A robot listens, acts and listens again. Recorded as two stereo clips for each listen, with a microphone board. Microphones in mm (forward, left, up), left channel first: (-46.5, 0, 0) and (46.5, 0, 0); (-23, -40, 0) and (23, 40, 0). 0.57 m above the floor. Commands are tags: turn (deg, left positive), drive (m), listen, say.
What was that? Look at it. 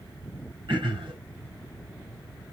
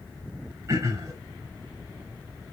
<turn deg="10"/>
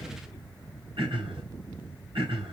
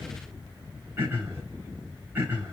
<say>Facing the throat clearing, over 4 m away.</say>